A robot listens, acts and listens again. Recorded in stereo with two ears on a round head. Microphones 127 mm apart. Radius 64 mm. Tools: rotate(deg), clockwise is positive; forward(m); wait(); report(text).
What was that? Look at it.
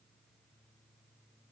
wait()
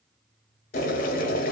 rotate(-65)
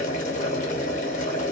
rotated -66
rotate(-50)
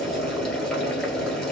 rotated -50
report("Found it: boiling, straight ahead.")